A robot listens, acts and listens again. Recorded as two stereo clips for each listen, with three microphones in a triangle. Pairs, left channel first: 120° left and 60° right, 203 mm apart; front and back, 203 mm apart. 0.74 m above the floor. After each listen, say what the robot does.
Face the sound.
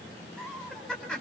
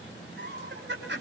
Turn 155° right.
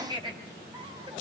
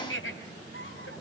Facing the laughter, over 4 m away.